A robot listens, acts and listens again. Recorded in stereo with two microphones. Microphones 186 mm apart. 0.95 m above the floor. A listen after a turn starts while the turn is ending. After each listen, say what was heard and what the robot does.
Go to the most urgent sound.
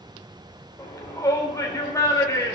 The shout: about 20° left or 160° left. Turn 20° left.
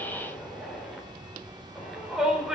Drive 1.0 m forward.
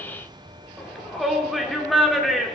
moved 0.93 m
Drive 1.0 m forward.
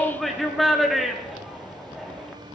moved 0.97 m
Drive 1.0 m forward.
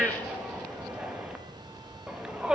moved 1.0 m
Drive 1.0 m forward.
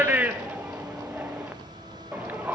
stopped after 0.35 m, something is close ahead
The shout is now 10° right. Turn 10° right.
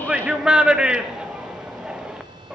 I am next to the shout.